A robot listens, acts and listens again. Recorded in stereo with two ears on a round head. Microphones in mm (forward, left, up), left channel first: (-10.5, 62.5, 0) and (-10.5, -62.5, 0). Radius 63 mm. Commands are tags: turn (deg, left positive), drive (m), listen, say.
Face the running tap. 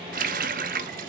<turn deg="-65"/>
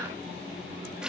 <say>Facing the running tap, under 1 m away.</say>